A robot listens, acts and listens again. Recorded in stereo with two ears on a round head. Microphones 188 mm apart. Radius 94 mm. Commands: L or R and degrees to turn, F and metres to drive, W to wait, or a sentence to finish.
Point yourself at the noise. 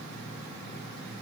W
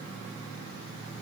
W
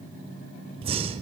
R25
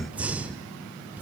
Facing the breathing, 1 to 2 m away.